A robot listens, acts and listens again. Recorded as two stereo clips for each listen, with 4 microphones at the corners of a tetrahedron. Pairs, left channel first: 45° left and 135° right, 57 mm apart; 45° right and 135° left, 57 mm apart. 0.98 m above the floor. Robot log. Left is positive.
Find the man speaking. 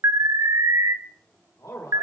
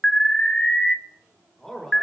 note: The man speaking: 40° left.
cmd yaw +40
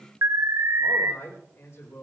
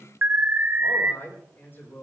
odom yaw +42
note: The man speaking is now 10° left.
cmd yaw +10
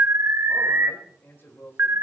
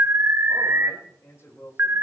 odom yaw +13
end: Found it: a man speaking, straight ahead.